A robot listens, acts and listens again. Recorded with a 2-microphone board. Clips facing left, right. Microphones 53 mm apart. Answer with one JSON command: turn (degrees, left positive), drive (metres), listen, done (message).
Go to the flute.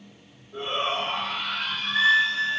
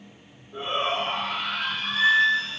{"turn": 50}
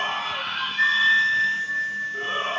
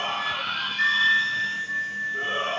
{"turn": 65}
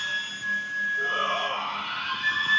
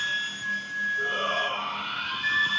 {"drive": 1.0}
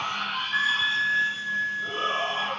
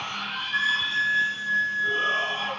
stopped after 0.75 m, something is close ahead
{"turn": 10}
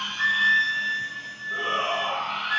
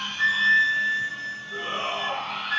{"done": "I am next to the flute."}